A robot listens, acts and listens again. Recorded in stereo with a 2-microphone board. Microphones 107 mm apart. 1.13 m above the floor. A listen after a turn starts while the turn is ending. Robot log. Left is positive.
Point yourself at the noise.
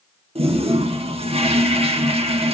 note: The toilet flushing: about 60° right or 120° right.
cmd yaw -60
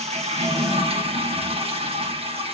note: So it is at 60° right.
cmd yaw -60
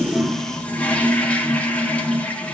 note: The toilet flushing is now 15° left.
cmd yaw +15
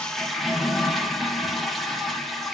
end: Facing the toilet flushing, 1 to 2 m away.